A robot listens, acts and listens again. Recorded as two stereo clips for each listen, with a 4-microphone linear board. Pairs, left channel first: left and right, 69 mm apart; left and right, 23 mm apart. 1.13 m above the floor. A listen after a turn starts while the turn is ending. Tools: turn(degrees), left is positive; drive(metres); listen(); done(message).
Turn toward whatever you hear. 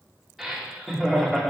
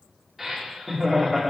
turn(degrees=30)
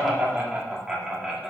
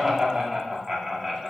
turn(degrees=-30)
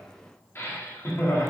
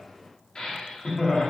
turn(degrees=50)
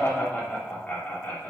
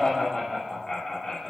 turn(degrees=25)
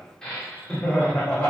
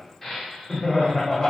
turn(degrees=20)
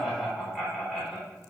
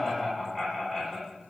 done("Facing the laughter, 2 to 4 m away.")